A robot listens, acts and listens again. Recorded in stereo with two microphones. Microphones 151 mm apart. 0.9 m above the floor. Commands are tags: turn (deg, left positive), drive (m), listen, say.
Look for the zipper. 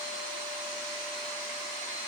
<listen/>
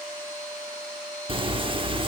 <turn deg="-35"/>
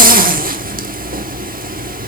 <turn deg="-105"/>
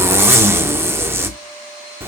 <turn deg="-15"/>
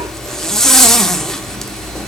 <say>Facing the zipper, under 1 m away.</say>